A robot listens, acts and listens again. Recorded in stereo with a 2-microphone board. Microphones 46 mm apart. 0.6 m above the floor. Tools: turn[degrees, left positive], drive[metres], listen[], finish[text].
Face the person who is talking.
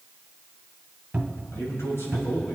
Thought: The man speaking: about 75° left or 105° left.
Action: turn[75]
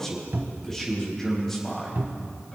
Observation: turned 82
Thought: So it is at 10° left.
Action: turn[10]
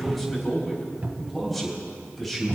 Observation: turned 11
Action: finish[Facing the man speaking.]